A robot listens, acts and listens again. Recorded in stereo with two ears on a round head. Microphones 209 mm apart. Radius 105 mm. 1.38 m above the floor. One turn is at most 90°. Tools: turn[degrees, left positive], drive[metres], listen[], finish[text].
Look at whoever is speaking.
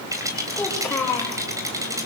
Action: turn[30]
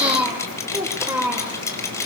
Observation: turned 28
Thought: So it is at 10° right.
Action: turn[-10]
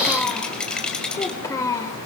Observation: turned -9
Thought: The child speaking is now 15° left.
Action: turn[15]
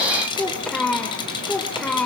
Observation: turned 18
Action: finish[Facing the child speaking, 2 to 4 m away.]